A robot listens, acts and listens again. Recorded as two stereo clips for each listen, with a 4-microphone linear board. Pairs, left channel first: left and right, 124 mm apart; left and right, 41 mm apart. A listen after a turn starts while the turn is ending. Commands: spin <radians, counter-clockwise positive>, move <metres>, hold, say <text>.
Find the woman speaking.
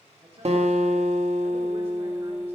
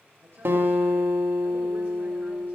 spin -1.05
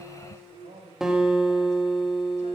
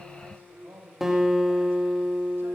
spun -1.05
spin -1.22
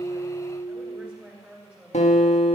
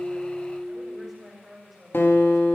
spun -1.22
say Found it: a woman speaking, straight ahead.